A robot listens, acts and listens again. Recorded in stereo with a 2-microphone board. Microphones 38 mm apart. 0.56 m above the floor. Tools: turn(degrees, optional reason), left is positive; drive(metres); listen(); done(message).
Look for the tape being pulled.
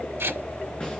turn(degrees=-90)
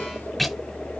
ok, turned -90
done("Found it: tape being pulled, straight ahead.")